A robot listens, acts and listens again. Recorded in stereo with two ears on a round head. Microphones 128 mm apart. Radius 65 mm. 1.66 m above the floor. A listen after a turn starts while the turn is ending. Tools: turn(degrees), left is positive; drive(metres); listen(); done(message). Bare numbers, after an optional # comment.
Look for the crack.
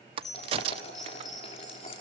# The crack: about 40° right or 140° right.
turn(-40)
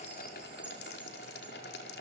listen()
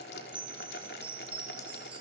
done("I heard a crack, but can't make it out now. It was about straight ahead or 100° right.")